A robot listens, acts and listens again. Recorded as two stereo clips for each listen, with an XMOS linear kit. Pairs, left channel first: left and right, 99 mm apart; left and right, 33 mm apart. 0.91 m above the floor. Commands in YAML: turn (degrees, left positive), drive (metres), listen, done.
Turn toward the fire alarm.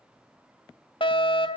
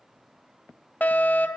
turn: 55
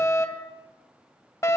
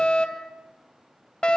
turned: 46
turn: 35
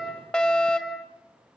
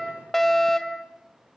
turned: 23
turn: 15
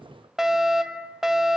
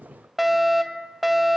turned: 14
done: "Facing the fire alarm."